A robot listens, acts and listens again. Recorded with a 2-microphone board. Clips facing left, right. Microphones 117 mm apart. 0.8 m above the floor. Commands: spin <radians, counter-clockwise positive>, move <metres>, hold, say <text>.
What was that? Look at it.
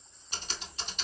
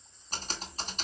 spin -0.70
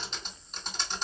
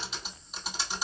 say Found it: typing on a keyboard, straight ahead.